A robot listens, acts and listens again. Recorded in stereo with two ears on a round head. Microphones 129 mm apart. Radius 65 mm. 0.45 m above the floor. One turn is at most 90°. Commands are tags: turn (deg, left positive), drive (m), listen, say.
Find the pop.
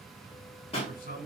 <turn deg="45"/>
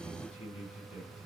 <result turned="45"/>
<listen/>
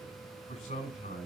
<say>I heard a pop, but can't make it out now. It was about straight ahead or 90° left.</say>